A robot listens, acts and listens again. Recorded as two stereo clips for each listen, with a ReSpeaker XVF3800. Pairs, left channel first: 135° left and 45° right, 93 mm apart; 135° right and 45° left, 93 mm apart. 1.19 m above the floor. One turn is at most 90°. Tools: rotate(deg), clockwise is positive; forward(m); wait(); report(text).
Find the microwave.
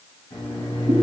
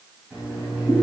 rotate(-90)
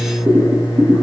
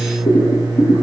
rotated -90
rotate(-85)
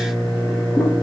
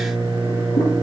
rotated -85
rotate(-35)
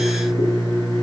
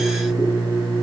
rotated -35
report("Found it: a microwave, straight ahead.")